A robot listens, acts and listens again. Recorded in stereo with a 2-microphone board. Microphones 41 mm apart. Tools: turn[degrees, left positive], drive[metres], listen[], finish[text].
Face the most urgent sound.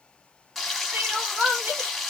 Thought: The crying: about 40° right or 140° right.
Action: turn[-40]
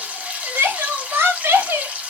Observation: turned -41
Thought: So it is at 100° right.
Action: turn[-100]
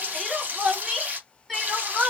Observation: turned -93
Action: finish[Facing the crying.]